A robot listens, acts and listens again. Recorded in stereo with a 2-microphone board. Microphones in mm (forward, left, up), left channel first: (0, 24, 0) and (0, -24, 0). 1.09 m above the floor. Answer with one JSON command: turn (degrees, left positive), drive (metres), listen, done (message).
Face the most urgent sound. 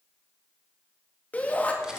{"turn": 30}
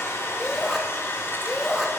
{"done": "Facing the shout."}